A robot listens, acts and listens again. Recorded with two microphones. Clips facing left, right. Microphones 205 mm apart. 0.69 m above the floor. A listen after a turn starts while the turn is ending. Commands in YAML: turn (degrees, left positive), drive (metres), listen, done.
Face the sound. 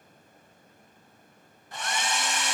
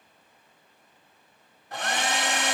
turn: -65
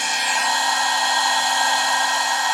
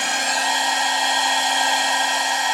turn: -25
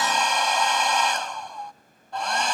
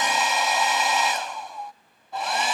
done: "Found it: a hair dryer, straight ahead."